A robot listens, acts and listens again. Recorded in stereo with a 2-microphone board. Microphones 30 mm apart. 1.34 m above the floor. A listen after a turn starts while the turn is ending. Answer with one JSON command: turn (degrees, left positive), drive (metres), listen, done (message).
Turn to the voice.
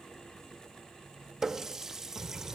{"turn": -90}
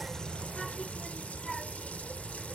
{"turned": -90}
{"turn": 10}
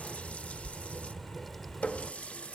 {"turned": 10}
{"done": "Found it: a child speaking, straight ahead."}